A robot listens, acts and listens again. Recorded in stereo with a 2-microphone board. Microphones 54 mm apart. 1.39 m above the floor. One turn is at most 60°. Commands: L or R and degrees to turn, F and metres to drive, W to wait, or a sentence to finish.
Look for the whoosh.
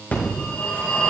W
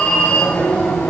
W
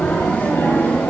I can't make out a whoosh to turn to.